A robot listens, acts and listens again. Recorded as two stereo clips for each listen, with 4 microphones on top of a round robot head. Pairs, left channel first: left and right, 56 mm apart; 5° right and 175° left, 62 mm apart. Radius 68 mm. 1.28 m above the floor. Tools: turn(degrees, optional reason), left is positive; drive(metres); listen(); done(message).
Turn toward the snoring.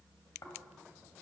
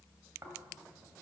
turn(degrees=125, reason="The snoring: 125° left.")
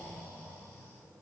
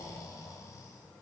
turn(degrees=25, reason="The snoring is now 25° left.")
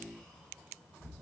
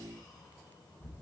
done("Facing the snoring, 2 to 4 m away.")